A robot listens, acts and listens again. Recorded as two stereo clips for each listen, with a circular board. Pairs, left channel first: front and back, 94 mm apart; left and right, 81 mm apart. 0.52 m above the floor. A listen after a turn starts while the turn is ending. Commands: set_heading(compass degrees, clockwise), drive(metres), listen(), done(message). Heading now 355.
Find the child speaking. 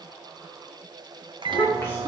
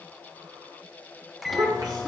set_heading(55)
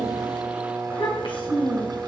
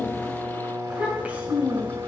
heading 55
set_heading(80)
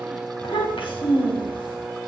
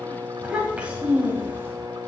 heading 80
set_heading(105)
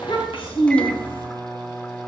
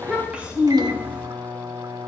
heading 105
set_heading(125)
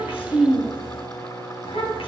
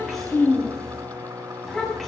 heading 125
done("Facing the child speaking.")